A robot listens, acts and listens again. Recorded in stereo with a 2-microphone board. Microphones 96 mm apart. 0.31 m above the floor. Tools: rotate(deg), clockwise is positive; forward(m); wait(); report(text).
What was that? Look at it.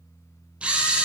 rotate(30)
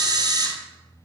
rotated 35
rotate(135)
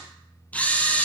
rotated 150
rotate(-15)
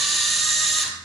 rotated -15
report("Found it: a camera shutter, straight ahead, 1 to 2 m away.")